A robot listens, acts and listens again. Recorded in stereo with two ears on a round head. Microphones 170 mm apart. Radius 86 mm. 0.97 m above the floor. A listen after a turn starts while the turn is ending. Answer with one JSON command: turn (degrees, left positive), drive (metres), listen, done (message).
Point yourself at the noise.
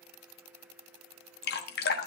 {"turn": 55}
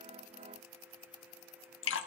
{"turn": 70}
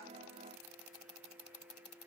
{"listen": true}
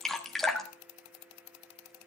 {"done": "Found it: dripping, straight ahead, 1 to 2 m away."}